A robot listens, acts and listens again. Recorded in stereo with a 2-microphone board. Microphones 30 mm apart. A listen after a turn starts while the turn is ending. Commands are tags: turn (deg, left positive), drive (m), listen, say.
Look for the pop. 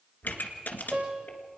<turn deg="90"/>
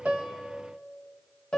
<say>Facing where the pop came from. I can't hear it now.</say>